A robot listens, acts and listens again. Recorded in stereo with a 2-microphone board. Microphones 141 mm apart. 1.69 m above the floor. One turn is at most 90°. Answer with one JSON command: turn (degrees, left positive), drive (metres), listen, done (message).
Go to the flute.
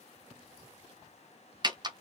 {"listen": true}
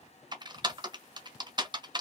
{"listen": true}
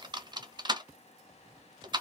{"done": "I can't make out a flute to turn to."}